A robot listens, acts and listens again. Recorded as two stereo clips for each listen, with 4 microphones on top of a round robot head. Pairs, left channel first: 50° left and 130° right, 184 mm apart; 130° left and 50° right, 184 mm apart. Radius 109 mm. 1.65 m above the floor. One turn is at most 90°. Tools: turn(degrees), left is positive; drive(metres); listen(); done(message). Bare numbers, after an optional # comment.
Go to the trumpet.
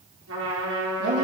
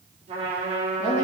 # The trumpet: 110° right.
turn(-90)
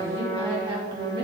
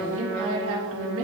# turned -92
# The trumpet is now 15° right.
turn(-15)
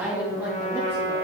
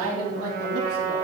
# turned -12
drive(1.0)
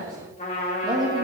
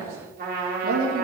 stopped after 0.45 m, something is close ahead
done("Something is in my way. I am facing the trumpet but have not reached it.")